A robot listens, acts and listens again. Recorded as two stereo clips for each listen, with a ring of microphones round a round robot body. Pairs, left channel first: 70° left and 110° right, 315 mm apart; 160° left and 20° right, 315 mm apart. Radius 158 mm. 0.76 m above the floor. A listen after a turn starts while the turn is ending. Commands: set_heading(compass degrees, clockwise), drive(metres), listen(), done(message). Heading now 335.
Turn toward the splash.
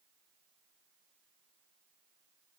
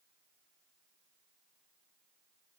listen()
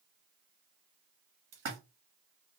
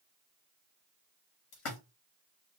set_heading(135)
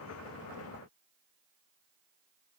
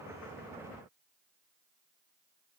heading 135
done("I heard a splash from this way, but can't make it out now.")